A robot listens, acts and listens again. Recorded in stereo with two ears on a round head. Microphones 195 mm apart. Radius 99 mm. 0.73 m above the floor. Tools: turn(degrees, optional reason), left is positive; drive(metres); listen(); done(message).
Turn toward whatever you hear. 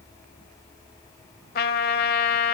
turn(degrees=45, reason="The trumpet: about 45° left or 135° left.")
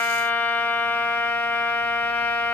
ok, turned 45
turn(degrees=10, reason="So it is at 10° left.")
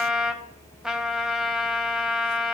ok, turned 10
done("Facing the trumpet.")